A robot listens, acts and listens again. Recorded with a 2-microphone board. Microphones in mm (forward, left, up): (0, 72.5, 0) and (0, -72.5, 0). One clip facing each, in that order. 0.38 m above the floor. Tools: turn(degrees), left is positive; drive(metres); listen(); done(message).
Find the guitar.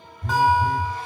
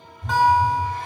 turn(degrees=30)
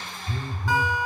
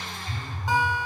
turn(degrees=-25)
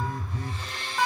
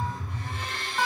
done("Facing the guitar, 2 to 4 m away.")